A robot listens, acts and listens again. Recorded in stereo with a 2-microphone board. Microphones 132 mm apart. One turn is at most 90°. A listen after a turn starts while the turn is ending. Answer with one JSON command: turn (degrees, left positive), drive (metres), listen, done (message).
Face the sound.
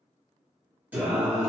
{"turn": -30}
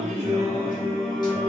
{"turn": 40}
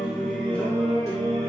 {"turn": 30}
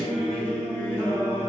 {"turn": 25}
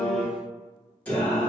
{"turn": 15}
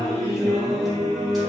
{"done": "Facing the singing, 1 to 2 m away."}